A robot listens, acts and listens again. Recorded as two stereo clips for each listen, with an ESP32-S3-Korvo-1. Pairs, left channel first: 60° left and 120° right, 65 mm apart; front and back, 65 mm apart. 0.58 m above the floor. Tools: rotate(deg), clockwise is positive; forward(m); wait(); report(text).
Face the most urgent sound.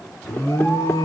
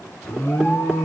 rotate(-50)
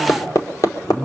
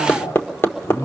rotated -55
report("Found it: an alarm, straight ahead.")